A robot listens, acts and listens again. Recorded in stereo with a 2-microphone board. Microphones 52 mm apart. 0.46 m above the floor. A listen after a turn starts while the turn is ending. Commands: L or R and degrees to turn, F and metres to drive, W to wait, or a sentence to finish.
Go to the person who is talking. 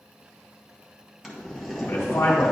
L55
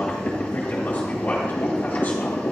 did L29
L45
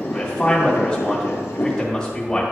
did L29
L15
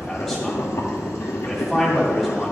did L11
F1.0
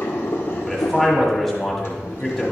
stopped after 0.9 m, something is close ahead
I am next to the man speaking.